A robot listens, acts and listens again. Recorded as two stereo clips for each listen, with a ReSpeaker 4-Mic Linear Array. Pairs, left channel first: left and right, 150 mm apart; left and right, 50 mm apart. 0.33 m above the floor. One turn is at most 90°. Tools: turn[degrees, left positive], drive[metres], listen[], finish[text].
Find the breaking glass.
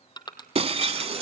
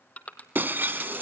Thought: The breaking glass: about 40° right or 140° right.
Action: turn[-40]
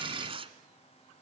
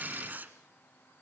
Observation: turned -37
Action: listen[]
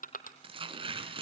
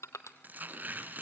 Action: finish[I heard breaking glass, but can't make it out now. It was about 5° right or 100° right.]